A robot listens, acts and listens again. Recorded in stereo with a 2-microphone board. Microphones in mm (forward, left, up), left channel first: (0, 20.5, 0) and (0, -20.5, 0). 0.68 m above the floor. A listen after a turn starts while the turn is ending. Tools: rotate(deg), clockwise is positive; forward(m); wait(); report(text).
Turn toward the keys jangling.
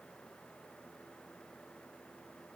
wait()
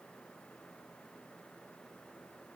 wait()
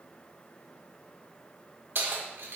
rotate(70)
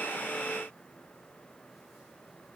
wait()
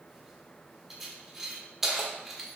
rotate(10)
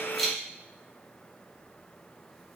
report("Facing the keys jangling.")